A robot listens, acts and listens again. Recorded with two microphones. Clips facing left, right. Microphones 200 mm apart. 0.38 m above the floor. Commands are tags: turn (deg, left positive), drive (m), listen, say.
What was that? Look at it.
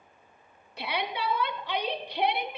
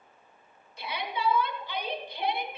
<turn deg="70"/>
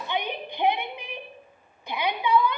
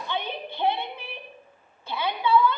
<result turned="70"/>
<turn deg="15"/>
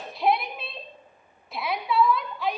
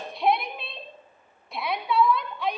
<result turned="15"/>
<say>Found it: a shout, straight ahead.</say>